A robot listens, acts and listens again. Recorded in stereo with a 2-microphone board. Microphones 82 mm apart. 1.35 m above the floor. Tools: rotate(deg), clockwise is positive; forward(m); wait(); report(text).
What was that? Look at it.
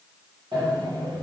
rotate(60)
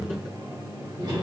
rotate(60)
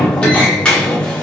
rotate(-10)
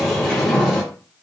report("Found it: a sliding door, straight ahead.")